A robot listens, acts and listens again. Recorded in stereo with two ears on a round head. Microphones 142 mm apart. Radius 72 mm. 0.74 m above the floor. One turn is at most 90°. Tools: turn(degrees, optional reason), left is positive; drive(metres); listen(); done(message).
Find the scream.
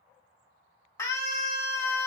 turn(degrees=20, reason="The scream: about 20° left or 160° left.")
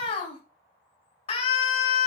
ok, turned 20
turn(degrees=90, reason="So it is at 140° left.")
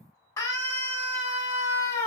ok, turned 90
turn(degrees=20, reason="The scream is now 20° left.")
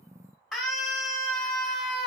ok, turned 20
done("Found it: a scream, straight ahead.")